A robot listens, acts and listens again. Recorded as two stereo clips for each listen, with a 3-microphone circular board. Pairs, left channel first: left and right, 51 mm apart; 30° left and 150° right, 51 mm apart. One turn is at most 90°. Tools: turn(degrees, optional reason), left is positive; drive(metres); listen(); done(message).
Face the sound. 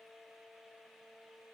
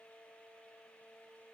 listen()
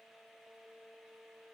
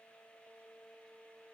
listen()
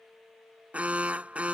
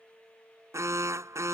turn(degrees=-90, reason="The alarm: 155° right.")
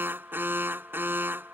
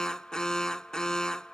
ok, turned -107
turn(degrees=-45, reason="The alarm is now 45° right.")
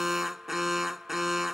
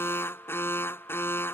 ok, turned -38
done("Facing the alarm.")